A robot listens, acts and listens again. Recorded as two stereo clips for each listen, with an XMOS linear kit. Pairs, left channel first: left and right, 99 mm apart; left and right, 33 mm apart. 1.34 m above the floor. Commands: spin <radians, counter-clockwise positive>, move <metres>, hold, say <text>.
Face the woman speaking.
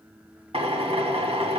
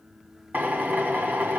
hold
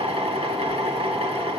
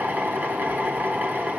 hold
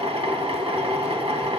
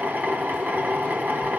say I can't make out a woman speaking, only a drill.